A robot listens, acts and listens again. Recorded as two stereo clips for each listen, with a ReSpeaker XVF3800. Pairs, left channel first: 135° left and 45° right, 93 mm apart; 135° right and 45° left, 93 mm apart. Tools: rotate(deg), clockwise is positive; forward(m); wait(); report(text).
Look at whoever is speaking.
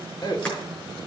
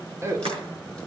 rotate(-100)
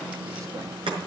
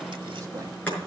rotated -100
wait()
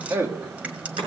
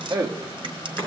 rotate(-10)
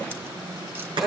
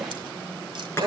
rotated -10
rotate(-40)
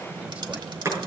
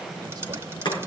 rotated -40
wait()
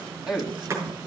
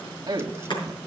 rotate(-40)
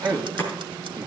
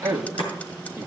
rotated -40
report("Found it: a man speaking, straight ahead, 1 to 2 m away.")